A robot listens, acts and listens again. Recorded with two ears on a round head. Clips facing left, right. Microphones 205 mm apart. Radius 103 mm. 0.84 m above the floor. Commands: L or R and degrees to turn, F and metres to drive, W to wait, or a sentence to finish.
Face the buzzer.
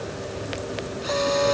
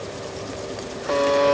R50
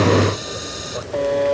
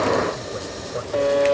Found it: a buzzer, straight ahead.